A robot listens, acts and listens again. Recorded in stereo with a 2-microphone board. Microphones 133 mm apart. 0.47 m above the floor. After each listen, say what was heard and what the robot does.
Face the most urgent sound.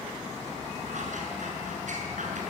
Keep listening.
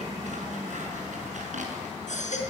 The baby crying: about 65° left or 115° left. Turn 65° left.
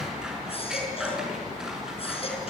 Keep listening.
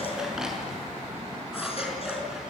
Keep listening.
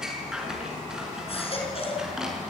So it is at 50° left. Turn 50° left.
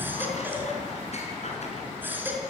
The baby crying is now 15° right. Turn 15° right.
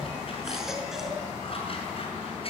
Keep listening.
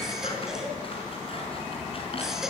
Facing the baby crying, over 4 m away.